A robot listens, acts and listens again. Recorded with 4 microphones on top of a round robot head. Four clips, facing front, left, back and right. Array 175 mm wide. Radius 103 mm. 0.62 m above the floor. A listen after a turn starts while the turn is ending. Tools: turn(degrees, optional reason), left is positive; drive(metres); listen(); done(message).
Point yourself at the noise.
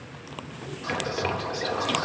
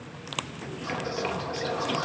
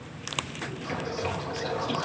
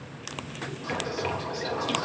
turn(degrees=10, reason="The whispering: 10° left.")
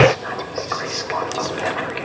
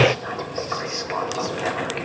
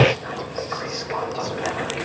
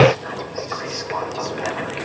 done("Facing the whispering.")